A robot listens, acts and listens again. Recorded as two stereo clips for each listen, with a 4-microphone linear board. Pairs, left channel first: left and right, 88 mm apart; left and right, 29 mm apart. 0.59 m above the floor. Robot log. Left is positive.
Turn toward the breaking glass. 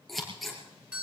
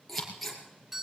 cmd idle
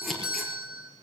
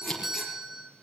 cmd idle
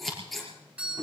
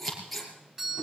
end: I can't make out breaking glass to turn to.